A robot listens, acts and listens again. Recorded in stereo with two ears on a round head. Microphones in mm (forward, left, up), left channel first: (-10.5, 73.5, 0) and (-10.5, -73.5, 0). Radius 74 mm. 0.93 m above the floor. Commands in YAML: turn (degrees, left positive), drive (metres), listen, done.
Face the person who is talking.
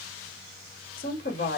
turn: 55
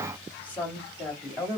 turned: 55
turn: 10
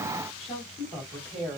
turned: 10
done: "Facing the woman speaking."